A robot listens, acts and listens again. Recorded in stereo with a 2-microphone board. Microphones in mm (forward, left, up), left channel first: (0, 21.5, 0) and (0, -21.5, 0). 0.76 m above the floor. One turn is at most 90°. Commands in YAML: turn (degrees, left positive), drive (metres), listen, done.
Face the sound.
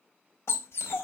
turn: 90
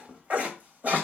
turn: -40
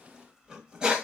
turn: -20
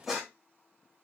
done: "Facing the dog barking, 2 to 4 m away."